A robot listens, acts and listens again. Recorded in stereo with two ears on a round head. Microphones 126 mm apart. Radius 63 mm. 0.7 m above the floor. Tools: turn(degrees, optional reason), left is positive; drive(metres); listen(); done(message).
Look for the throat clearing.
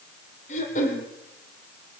turn(degrees=55, reason="The throat clearing: about 55° left or 125° left.")
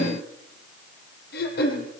turn(degrees=75, reason="So it is at 75° left.")
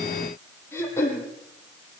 turn(degrees=20, reason="The throat clearing is now 20° left.")
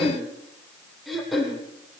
done("Found it: throat clearing, straight ahead.")